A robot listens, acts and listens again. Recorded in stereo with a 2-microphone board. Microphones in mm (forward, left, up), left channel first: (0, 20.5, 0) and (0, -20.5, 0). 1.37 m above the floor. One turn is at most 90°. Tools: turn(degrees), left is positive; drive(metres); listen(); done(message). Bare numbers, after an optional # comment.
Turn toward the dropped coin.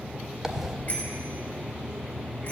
turn(-30)
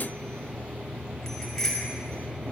listen()
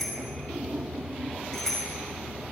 done("I heard a dropped coin, but can't make it out now. It was about 20° left or 140° right.")